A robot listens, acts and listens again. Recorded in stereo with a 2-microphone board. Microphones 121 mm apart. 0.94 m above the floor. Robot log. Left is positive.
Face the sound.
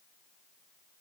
cmd idle
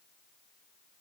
cmd idle
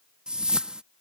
cmd yaw -30
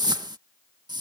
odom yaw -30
note: So it is at 145° right.
cmd yaw -145
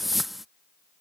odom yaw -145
end: Found it: a whoosh, straight ahead.